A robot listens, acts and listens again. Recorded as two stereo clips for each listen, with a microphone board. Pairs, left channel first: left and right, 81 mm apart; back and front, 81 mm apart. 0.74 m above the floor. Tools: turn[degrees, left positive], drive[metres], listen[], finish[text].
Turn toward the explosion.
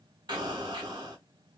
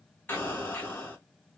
Thought: The explosion: 115° right.
Action: turn[-115]
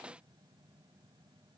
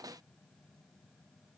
Action: finish[Facing where the explosion came from. I can't hear it now.]